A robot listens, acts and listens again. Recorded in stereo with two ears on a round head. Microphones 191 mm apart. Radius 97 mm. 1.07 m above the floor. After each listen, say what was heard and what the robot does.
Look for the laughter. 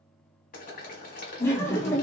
Turn 30° left.
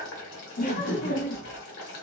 So it is at 135° left. Turn 135° left.
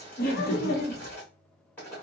The laughter is now 45° left. Turn 45° left.
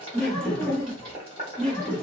Facing the laughter.